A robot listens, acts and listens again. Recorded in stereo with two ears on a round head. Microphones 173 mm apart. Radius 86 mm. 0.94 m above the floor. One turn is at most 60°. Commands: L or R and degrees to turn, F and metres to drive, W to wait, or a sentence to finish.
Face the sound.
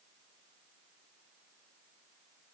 W
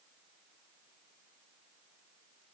W
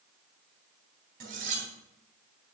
R50
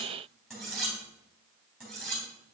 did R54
Facing the cutlery clinking, 2 to 4 m away.